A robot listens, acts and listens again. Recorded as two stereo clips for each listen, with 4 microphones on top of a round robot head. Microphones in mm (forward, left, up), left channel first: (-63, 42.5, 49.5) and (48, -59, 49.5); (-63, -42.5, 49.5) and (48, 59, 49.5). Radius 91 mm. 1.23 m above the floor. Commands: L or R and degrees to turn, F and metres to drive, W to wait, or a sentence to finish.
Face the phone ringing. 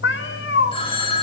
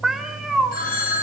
R165
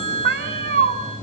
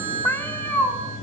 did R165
Found it: a phone ringing, straight ahead, over 4 m away.